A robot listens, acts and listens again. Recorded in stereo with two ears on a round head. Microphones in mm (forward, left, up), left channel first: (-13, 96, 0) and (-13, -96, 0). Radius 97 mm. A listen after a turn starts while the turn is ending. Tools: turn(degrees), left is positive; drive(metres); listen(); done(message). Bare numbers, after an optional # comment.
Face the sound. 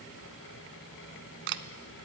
# The camera shutter: about 55° right or 125° right.
turn(-55)
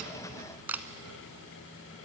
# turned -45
# So it is at 10° right.
turn(-10)
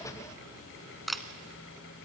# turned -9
done("Found it: a camera shutter, straight ahead.")